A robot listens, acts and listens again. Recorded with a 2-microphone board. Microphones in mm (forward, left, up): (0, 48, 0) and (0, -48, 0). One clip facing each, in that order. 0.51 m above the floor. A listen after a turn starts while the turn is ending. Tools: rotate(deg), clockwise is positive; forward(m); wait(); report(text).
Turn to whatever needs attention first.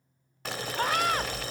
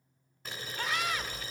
rotate(-50)
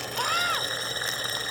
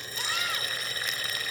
rotate(-65)
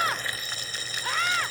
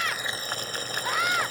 rotate(10)
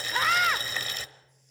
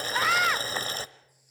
report("Found it: a scream, straight ahead.")